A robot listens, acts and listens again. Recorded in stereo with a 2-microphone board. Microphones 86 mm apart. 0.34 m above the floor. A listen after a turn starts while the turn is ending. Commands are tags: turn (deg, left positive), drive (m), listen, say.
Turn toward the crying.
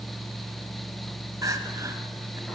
<turn deg="-40"/>
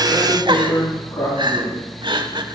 <turn deg="-90"/>
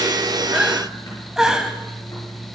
<say>Facing the crying, 1 to 2 m away.</say>